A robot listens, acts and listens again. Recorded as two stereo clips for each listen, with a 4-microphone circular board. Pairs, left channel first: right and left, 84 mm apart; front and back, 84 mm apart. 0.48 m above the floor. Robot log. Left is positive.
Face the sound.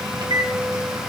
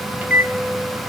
note: The microwave: 110° left.
cmd yaw +110
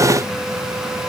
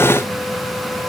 cmd idle
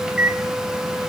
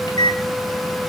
note: The microwave is now 10° left.
cmd yaw +10
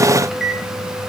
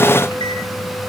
cmd idle
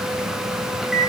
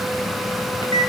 end: Facing the microwave.